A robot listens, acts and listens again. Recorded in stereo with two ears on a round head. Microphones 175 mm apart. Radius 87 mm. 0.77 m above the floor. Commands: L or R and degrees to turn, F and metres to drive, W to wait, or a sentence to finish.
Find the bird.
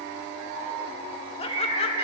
R25
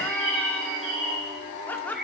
Found it: a bird, straight ahead, 2 to 4 m away.